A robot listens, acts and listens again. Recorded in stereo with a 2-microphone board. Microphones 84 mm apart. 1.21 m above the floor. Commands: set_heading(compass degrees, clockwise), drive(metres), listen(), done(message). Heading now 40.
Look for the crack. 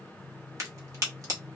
set_heading(80)
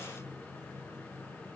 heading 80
listen()
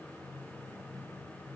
done("I heard a crack, but can't make it out now. It was about straight ahead or 100° right.")